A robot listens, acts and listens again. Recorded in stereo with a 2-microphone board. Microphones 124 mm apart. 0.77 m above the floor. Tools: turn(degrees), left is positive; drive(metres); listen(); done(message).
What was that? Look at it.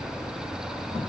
listen()
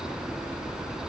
listen()
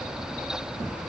done("I can't make out anything.")